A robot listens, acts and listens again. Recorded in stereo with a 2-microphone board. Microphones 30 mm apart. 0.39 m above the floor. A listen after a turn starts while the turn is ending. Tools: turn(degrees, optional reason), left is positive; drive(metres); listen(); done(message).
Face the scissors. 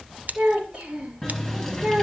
turn(degrees=-90)
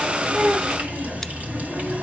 listen()
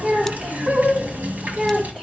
listen()
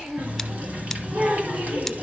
done("Facing where the scissors came from. I can't hear it now.")